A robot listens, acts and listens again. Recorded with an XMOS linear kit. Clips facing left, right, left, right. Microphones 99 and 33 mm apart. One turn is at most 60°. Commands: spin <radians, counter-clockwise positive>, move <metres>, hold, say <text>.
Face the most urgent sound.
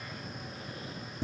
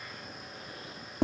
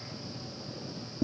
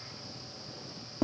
hold
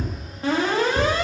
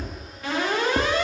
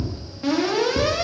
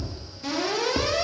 spin 0.61
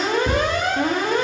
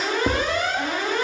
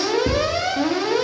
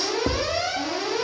spin 1.05
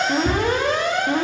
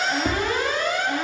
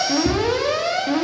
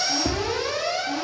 spin 1.05
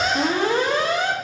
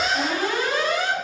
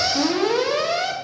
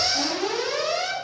spin 0.52
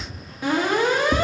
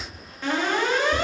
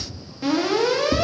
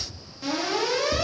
spin 0.17
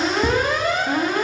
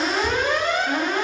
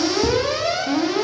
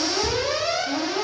say Facing the alarm.